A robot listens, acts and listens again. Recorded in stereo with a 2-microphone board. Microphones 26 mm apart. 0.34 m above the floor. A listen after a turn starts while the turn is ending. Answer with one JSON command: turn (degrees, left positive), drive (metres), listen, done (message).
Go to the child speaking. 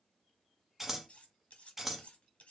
{"listen": true}
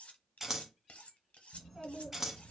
{"turn": 30}
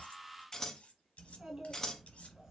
{"turn": -30}
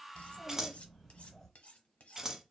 {"turn": 10}
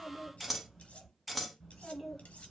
{"drive": 1.0}
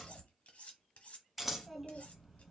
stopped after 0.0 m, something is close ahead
{"done": "Blocked. The child speaking is further on, straight ahead."}